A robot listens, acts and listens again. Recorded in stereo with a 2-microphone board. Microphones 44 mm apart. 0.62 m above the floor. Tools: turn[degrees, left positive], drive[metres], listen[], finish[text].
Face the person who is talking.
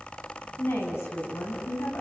Thought: The woman speaking: about 70° left or 110° left.
Action: turn[70]
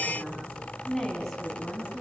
Action: finish[Facing the woman speaking, over 4 m away.]